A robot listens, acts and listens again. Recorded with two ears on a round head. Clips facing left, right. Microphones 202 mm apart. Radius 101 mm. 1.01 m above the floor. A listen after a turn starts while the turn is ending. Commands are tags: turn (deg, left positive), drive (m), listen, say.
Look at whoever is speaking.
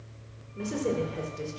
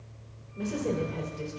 <turn deg="25"/>
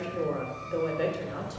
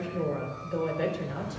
<say>Found it: a woman speaking, straight ahead.</say>